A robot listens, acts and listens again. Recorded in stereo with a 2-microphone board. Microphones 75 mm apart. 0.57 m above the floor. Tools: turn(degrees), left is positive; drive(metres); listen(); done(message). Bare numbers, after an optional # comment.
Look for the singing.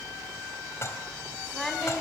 turn(30)
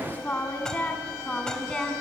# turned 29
turn(30)
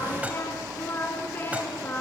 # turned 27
# So it is at 155° left.
turn(155)
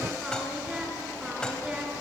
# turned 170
# The singing is now 15° right.
turn(-15)
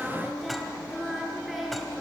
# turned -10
done("Found it: singing, straight ahead, 2 to 4 m away.")